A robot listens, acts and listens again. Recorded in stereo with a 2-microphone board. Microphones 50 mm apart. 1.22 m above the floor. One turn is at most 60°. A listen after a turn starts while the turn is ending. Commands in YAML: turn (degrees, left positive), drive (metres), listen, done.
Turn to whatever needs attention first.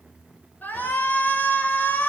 turn: 35
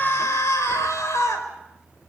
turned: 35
turn: 60
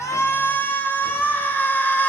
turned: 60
turn: 40
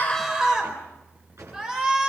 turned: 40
turn: -10
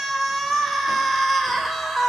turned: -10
done: "Found it: a shout, straight ahead."